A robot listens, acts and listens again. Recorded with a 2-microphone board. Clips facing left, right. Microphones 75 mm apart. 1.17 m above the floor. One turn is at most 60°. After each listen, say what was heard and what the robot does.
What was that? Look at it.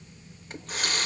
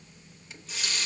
The running tap: about 50° left or 130° left. Turn 50° left.
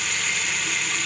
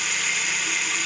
Found it: a running tap, straight ahead, under 1 m away.